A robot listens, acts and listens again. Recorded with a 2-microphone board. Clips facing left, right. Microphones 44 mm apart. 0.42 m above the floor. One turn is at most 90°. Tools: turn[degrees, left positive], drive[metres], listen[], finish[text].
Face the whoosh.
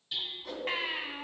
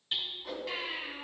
Action: turn[-30]
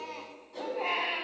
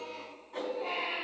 Thought: So it is at 145° right.
Action: turn[-90]
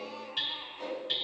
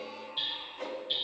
Thought: The whoosh is now 55° right.
Action: turn[-55]
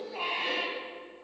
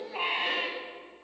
Action: listen[]
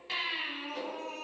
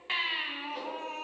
Action: listen[]
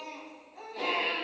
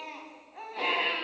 Action: finish[Facing where the whoosh came from. I can't hear it now.]